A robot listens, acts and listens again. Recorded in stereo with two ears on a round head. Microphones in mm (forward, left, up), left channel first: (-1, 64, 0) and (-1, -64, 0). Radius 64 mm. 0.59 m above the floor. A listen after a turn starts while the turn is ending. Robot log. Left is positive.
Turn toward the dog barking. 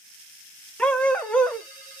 cmd yaw +30
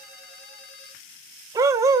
note: So it is at 20° right.
cmd yaw -20
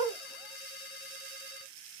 cmd idle
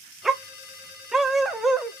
end: Found it: a dog barking, straight ahead.